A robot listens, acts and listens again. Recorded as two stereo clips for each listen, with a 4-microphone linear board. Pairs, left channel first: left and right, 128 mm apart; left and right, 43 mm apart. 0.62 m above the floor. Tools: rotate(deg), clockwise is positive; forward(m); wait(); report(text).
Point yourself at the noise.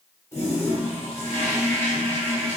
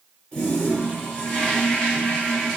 rotate(-20)
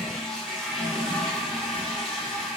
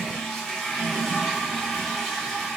report("Facing the toilet flushing, 1 to 2 m away.")